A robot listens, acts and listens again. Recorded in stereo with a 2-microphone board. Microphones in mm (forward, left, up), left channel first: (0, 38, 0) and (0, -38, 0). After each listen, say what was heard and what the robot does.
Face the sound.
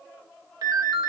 The ringtone: about 60° right or 120° right. Turn 60° right.
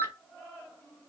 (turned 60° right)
So it is at 40° right. Turn 40° right.
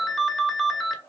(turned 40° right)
Found it: a ringtone, straight ahead.